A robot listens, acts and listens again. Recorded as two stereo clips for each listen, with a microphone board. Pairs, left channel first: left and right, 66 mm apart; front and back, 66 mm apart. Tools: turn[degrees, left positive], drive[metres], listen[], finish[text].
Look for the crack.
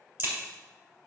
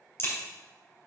Thought: The crack: 40° right.
Action: turn[-40]
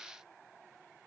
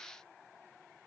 Action: finish[Facing where the crack came from. I can't hear it now.]